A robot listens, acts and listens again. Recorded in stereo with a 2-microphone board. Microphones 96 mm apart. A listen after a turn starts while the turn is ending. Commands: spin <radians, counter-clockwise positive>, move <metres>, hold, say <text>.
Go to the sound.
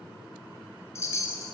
spin 0.52
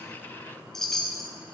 move 1.0
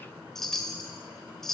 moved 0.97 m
move 1.0
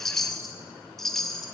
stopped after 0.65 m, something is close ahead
say I am next to the chime.